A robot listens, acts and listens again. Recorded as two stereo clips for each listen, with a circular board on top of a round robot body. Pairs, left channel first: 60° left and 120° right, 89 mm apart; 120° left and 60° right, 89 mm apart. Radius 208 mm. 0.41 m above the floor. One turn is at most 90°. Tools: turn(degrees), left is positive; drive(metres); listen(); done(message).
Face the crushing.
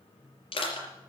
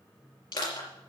turn(degrees=85)
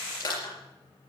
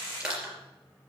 turn(degrees=20)
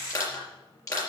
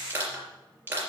done("Facing the crushing.")